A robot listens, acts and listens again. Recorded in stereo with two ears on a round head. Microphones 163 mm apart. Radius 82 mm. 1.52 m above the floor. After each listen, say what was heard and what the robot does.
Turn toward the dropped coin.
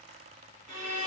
Keep listening.
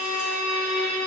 Keep listening.
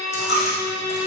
The dropped coin: about 35° left or 145° left. Turn 35° left.
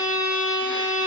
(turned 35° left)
Keep listening.
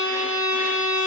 I heard a dropped coin, but can't make it out now. It was about straight ahead or 110° left.